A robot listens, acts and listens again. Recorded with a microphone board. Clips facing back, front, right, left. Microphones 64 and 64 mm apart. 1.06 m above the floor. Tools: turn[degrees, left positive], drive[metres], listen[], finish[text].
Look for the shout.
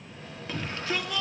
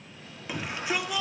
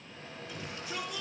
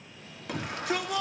Thought: The shout: 75° left.
Action: turn[75]
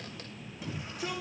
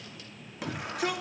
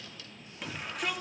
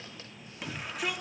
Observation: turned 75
Action: finish[Found it: a shout, straight ahead, 2 to 4 m away.]